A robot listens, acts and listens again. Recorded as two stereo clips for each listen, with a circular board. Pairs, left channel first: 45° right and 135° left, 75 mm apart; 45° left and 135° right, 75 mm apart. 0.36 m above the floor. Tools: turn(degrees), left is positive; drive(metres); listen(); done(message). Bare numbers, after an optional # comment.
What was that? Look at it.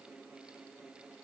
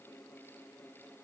listen()
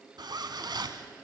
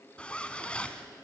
# The zipper: 120° left.
turn(120)
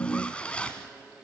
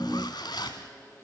# The zipper is now 30° left.
turn(30)
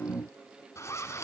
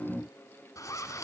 done("Found it: a zipper, straight ahead.")